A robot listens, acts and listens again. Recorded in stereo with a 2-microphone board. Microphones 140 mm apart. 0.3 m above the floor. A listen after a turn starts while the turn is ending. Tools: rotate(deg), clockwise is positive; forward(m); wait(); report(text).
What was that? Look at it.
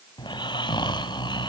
rotate(-35)
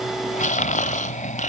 rotate(-105)
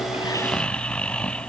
rotate(-10)
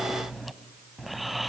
report("Facing the snoring, under 1 m away.")